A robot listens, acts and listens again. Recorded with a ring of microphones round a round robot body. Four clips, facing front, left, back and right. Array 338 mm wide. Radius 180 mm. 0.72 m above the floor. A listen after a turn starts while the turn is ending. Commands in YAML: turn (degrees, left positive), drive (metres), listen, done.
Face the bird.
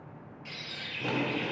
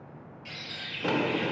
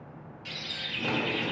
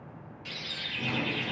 turn: -135
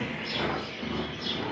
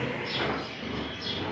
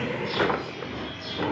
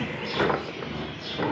turn: 10
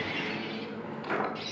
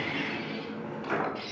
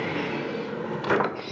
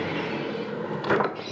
done: "Found it: a bird, straight ahead, over 4 m away."